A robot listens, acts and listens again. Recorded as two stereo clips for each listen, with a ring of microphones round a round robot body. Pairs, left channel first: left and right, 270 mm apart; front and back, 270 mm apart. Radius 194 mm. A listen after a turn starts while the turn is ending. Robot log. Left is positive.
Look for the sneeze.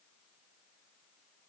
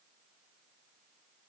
cmd idle
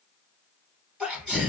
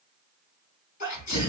end: Facing the sneeze, 2 to 4 m away.